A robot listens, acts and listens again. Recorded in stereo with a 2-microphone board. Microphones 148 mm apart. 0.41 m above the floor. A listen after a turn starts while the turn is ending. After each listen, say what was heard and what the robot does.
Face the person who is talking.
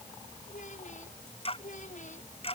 The child speaking: about 55° left or 125° left. Turn 55° left.
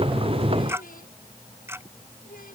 So it is at 70° left. Turn 70° left.
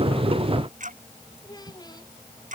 The child speaking is now 25° left. Turn 25° left.
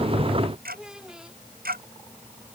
Facing the child speaking.